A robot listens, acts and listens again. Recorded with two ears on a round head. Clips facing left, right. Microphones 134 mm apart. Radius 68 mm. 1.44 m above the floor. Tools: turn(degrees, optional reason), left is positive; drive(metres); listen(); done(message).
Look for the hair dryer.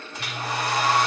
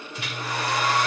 turn(degrees=35, reason="The hair dryer: about 35° left or 145° left.")
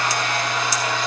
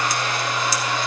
turn(degrees=110, reason="So it is at 110° left.")
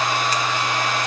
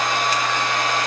turn(degrees=10, reason="The hair dryer is now 10° left.")
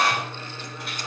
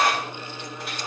done("Found it: a hair dryer, straight ahead.")